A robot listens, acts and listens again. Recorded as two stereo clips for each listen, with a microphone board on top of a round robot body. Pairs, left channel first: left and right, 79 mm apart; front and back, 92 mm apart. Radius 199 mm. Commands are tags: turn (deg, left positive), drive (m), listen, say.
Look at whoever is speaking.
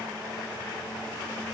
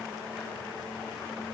<listen/>
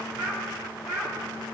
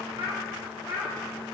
<turn deg="135"/>
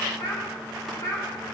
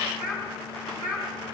<turn deg="50"/>
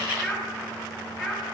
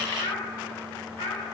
<say>Facing the child speaking, 2 to 4 m away.</say>